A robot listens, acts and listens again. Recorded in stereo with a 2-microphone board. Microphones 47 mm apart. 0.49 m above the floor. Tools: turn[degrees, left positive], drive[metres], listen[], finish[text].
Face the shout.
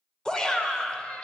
Thought: The shout: about 15° left or 165° left.
Action: turn[15]
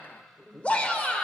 Thought: So it is at 150° left.
Action: turn[150]
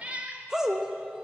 Thought: The shout is now 15° right.
Action: turn[-15]
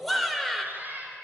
Action: finish[Found it: a shout, straight ahead, 1 to 2 m away.]